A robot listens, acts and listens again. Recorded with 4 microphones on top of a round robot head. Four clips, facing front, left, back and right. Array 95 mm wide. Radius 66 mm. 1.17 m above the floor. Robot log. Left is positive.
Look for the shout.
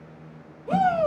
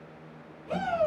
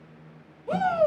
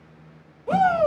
note: The shout: 85° right.
cmd yaw -85
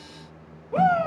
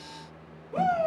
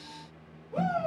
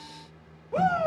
note: The shout is now 15° right.
cmd yaw -15
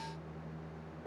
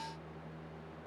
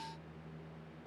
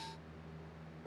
end: Facing the shout.